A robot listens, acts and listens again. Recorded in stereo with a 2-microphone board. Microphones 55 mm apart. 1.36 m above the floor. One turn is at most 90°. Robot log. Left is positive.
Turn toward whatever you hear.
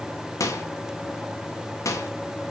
note: The microwave: about 70° left or 110° left.
cmd yaw +70
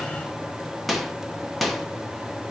end: Facing the microwave.